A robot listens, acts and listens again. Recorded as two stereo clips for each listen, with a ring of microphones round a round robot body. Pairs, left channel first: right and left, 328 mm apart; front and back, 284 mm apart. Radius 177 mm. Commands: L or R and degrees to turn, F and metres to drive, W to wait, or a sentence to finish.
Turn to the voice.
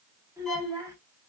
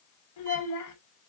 L10
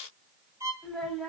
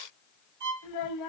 Found it: a child speaking, straight ahead, 1 to 2 m away.